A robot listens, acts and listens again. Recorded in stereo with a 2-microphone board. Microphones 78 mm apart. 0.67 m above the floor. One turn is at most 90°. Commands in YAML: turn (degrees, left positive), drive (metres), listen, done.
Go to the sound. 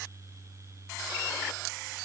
listen: true
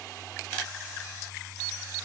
listen: true
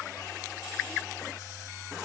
done: "I can't make out anything."